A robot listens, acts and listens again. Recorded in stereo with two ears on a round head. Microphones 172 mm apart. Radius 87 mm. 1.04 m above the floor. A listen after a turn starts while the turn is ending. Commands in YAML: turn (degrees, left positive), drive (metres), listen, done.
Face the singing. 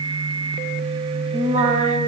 turn: -40
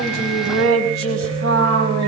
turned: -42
turn: -95
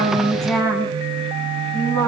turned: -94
turn: 10
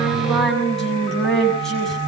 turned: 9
done: "Found it: singing, straight ahead."